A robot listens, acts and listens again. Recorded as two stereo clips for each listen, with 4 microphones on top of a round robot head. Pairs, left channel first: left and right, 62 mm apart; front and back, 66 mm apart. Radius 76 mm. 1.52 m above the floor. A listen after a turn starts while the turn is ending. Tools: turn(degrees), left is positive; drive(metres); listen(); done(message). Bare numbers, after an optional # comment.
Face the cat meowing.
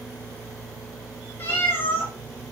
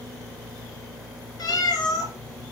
# The cat meowing: 20° left.
turn(20)
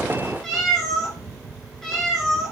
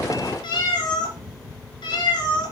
done("Facing the cat meowing, 2 to 4 m away.")